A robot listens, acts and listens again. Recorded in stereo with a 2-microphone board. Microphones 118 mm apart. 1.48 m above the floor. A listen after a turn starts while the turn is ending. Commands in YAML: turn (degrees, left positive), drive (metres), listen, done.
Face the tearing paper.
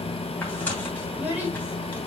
listen: true
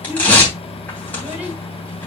turn: 30
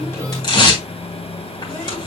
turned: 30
turn: 135
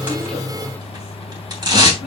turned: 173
turn: -40
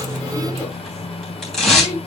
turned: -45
done: "Found it: tearing paper, straight ahead, 2 to 4 m away."